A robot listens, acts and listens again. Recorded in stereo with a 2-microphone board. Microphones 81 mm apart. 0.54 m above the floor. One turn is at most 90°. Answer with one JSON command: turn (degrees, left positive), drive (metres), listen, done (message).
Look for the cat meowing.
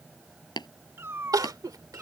{"turn": -20}
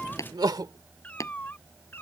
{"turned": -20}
{"turn": 30}
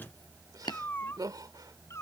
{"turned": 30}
{"turn": 35}
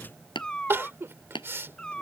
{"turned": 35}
{"turn": 10}
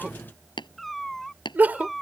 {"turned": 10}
{"done": "Found it: a cat meowing, straight ahead."}